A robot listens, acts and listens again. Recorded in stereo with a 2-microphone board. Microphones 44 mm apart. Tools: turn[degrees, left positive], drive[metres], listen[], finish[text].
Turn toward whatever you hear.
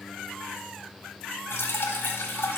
Thought: The dripping: about 65° left or 115° left.
Action: turn[65]
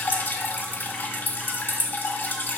Thought: So it is at 50° left.
Action: turn[50]
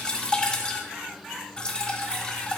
Thought: The dripping is now 20° left.
Action: turn[20]
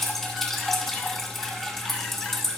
Thought: The dripping is now 10° left.
Action: turn[10]
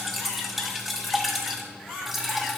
Action: finish[Found it: dripping, straight ahead.]